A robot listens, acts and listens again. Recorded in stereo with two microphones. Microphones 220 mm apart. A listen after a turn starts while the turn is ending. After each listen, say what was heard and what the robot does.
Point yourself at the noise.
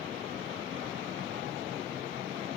Keep listening.
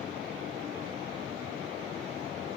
Keep listening.
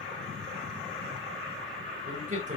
The man speaking: about 35° right or 145° right. Turn 35° right.
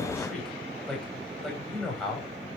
Facing the man speaking.